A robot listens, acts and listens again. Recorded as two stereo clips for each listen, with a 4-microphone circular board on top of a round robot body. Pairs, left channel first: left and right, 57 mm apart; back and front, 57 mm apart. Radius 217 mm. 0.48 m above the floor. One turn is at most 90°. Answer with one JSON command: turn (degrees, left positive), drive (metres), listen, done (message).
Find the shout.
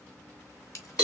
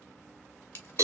{"listen": true}
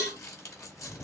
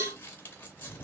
{"listen": true}
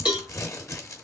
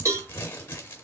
{"done": "I can't make out a shout, only crumpling and a cowbell."}